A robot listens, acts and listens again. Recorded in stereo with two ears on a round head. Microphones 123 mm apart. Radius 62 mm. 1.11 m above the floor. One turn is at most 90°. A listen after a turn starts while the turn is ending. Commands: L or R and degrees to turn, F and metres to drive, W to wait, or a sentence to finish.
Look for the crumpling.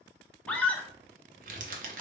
R65
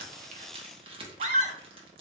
R40
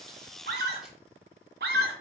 W
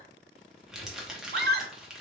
Facing the crumpling.